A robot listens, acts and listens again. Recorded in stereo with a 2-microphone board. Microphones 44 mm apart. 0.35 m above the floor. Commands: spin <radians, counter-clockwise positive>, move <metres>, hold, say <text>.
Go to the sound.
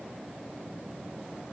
hold
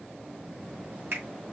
spin -0.96
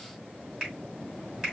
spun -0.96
spin -0.17
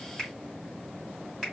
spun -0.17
move 1.0
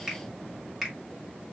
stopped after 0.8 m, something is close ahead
say Arrived at the finger snap, straight ahead.